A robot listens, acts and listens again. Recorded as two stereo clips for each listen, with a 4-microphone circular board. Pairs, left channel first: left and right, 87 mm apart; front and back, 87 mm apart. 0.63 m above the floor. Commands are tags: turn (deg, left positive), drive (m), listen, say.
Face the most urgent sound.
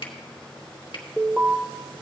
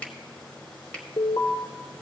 <turn deg="-10"/>
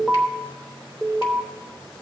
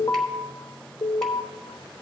<say>Facing the alarm, 1 to 2 m away.</say>